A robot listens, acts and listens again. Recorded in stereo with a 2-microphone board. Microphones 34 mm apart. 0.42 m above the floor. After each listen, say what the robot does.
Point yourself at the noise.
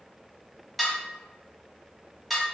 Turn 30° left.
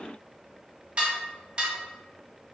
Turn 30° right.
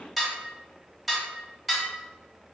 Facing the dishes clattering.